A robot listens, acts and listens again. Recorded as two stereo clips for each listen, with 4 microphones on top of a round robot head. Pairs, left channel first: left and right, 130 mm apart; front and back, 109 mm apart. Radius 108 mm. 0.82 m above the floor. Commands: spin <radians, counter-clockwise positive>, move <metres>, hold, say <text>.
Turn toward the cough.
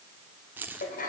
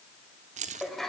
hold
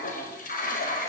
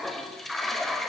hold
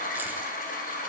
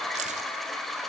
say I can't make out a cough, only a toilet flushing and keys jangling.